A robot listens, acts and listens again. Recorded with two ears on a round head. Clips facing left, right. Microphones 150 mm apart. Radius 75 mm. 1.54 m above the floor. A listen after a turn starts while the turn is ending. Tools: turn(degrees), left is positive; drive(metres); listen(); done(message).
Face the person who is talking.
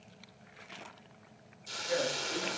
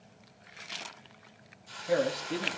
turn(degrees=-70)
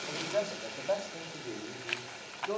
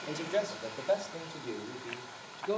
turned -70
turn(degrees=-10)
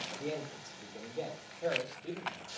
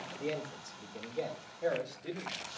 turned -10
done("Found it: a man speaking, straight ahead, over 4 m away.")